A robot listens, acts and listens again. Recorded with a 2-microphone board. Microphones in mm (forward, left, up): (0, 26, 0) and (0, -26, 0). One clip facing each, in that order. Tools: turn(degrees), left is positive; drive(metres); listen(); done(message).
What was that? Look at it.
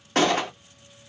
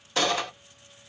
turn(degrees=55)
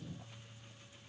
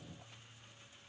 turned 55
listen()
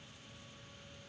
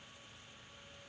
done("I heard a gunshot, but can't make it out now. It was about straight ahead or 70° left.")